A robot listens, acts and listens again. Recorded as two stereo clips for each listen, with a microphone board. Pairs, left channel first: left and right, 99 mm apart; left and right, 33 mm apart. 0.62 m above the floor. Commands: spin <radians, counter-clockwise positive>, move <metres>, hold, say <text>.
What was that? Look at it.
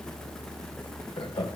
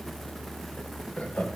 spin 1.13
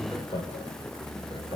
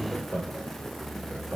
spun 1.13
spin 0.96
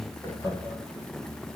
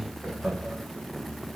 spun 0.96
hold
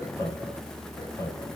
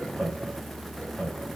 spin 0.61
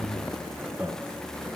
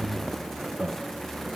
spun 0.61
say Facing the laughter.